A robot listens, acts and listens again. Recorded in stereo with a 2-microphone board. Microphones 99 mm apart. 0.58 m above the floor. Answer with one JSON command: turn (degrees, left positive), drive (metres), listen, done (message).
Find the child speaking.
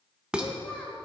{"turn": 30}
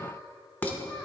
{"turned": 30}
{"turn": 25}
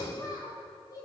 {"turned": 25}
{"turn": 140}
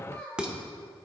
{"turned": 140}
{"turn": 10}
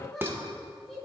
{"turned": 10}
{"done": "Found it: a child speaking, straight ahead."}